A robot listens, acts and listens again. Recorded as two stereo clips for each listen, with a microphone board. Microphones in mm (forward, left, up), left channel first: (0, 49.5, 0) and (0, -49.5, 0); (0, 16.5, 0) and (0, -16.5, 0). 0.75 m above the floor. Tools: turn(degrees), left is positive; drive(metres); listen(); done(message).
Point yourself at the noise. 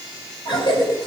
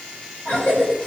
turn(degrees=50)
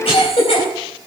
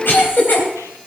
turn(degrees=80)
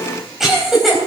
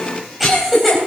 done("Found it: a cough, straight ahead, 2 to 4 m away.")